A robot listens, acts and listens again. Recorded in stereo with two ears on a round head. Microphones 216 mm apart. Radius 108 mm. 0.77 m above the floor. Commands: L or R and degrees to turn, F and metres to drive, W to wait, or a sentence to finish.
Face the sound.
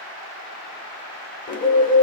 L35
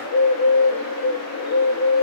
L110
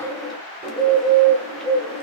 Facing the bird.